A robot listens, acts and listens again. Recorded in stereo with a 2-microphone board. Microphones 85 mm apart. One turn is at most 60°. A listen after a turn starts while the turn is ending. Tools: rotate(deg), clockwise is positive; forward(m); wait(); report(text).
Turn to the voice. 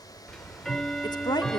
rotate(-60)
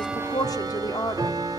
rotate(-55)
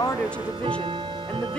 rotate(-15)
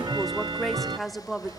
report("Facing the woman speaking.")